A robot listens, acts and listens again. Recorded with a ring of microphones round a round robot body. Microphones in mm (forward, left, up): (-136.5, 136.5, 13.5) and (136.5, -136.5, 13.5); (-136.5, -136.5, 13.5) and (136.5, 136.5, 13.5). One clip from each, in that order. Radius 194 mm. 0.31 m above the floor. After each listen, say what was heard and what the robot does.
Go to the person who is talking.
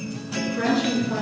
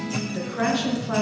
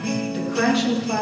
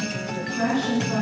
The woman speaking: 70° right. Turn 70° right.
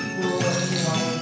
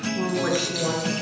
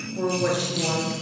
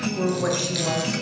The woman speaking is now 10° left. Turn 10° left.
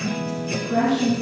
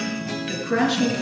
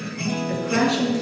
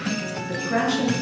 Drive 1.0 m forward.
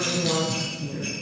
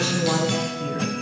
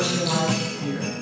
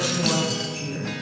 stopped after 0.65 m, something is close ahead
Keep listening.
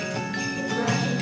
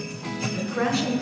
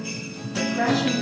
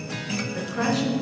Keep listening.
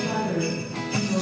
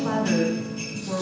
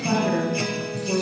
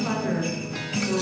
Blocked. The woman speaking is further on, straight ahead.